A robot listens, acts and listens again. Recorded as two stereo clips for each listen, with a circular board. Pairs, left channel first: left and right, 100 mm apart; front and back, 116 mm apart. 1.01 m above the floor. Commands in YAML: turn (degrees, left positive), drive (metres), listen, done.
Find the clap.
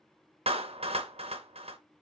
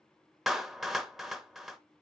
turn: -90
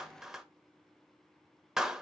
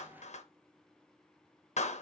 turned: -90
done: "Facing the clap, under 1 m away."